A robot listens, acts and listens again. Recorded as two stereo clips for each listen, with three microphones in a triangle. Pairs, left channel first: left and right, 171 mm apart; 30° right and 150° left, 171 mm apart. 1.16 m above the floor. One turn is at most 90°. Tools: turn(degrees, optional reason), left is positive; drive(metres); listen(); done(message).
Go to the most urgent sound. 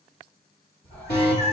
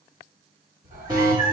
turn(degrees=85, reason="The alarm: 85° left.")
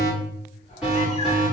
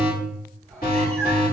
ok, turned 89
drive(metres=1.0)
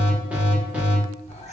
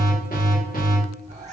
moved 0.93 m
turn(degrees=-10, reason="The alarm is now 10° right.")
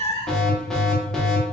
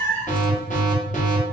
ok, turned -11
drive(metres=1.0)
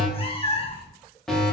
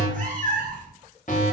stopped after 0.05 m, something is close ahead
done("I am next to the alarm.")